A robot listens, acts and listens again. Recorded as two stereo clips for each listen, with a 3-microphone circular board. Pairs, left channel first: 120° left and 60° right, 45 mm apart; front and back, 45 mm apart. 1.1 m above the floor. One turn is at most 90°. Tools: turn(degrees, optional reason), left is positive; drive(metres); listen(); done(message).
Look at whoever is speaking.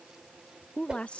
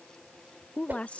turn(degrees=60, reason="The woman speaking: 60° left.")
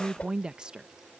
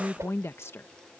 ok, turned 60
turn(degrees=10, reason="The woman speaking is now 10° left.")
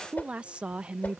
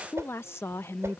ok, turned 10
done("Found it: a woman speaking, straight ahead.")